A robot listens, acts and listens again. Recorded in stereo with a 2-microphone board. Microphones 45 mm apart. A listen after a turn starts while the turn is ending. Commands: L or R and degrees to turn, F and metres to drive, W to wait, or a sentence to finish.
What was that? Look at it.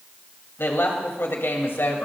L65
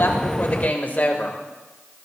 L45
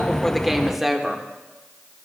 Found it: a woman speaking, straight ahead.